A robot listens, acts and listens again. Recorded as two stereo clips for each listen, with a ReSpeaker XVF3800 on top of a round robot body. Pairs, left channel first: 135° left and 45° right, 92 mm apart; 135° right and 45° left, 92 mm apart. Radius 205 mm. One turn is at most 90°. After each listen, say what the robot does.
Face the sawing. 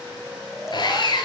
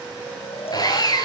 Turn 90° left.
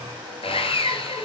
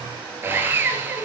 Turn 90° left.
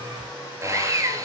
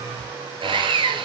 Turn 15° left.
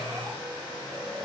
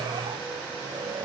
Keep listening.
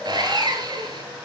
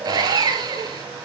Facing the sawing.